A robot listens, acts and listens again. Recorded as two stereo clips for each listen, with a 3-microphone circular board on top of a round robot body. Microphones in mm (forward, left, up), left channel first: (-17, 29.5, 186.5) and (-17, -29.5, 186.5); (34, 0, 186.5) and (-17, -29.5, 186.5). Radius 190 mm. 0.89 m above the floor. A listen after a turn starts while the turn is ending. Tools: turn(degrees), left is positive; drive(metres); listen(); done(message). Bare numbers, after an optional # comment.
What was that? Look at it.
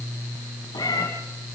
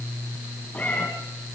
# The cat meowing: 95° left.
turn(95)
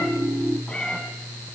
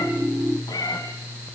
# The cat meowing is now 15° left.
turn(15)
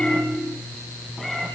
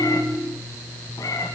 done("Found it: a cat meowing, straight ahead, 1 to 2 m away.")